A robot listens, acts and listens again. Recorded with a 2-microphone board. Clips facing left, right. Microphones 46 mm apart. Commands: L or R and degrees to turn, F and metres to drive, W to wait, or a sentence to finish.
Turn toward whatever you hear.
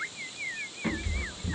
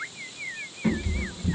L20
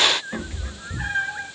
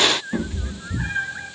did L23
L130
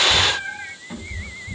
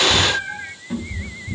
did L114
L10
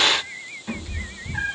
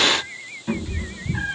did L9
Facing the cat meowing, over 4 m away.